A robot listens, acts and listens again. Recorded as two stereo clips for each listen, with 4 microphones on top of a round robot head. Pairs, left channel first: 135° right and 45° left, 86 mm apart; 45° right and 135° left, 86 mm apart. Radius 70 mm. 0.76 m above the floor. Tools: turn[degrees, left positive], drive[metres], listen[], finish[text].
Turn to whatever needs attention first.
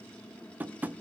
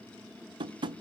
Action: listen[]
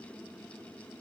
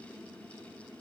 Action: listen[]
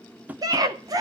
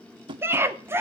Thought: The scream: 80° left.
Action: turn[80]
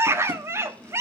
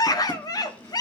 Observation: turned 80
Thought: The scream is now 10° right.
Action: turn[-10]
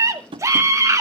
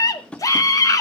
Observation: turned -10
Action: finish[Facing the scream.]